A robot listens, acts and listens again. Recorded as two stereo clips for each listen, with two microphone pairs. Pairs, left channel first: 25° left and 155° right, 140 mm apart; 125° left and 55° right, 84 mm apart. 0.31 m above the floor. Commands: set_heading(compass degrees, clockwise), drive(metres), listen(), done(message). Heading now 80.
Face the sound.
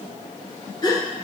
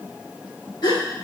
set_heading(355)
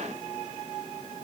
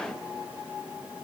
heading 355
done("Facing where the gasp came from. I can't hear it now.")